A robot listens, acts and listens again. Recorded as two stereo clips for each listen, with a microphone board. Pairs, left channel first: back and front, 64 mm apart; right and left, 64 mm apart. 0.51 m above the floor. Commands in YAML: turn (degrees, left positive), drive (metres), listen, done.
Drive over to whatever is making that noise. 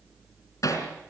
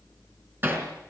turn: 145
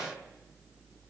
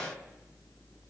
listen: true
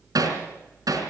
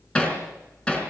turn: -15
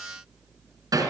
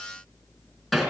drive: 1.0
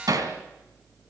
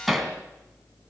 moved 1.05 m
drive: 1.0
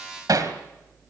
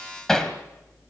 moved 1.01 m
drive: 1.0
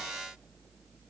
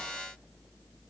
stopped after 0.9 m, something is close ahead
listen: true
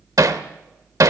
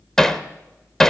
turn: -10
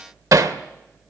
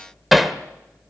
done: "Arrived at the hammering, straight ahead."